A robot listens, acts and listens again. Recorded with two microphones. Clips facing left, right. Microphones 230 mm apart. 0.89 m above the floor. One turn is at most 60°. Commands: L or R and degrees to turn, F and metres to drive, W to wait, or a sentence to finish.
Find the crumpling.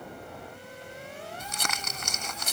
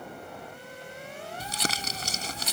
R35
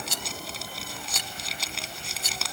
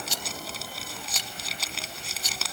Facing the crumpling.